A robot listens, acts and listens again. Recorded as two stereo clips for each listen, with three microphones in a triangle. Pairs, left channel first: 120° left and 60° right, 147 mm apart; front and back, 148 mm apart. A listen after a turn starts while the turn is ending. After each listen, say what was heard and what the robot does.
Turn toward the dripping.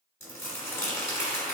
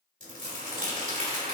Keep listening.
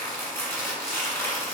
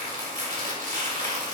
Keep listening.
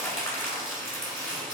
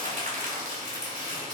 I can't make out dripping to turn to.